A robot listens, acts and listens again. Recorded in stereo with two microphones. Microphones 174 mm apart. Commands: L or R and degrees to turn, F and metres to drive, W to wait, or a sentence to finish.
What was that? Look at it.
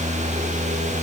W
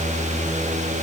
W
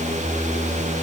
I can't make out anything to turn to.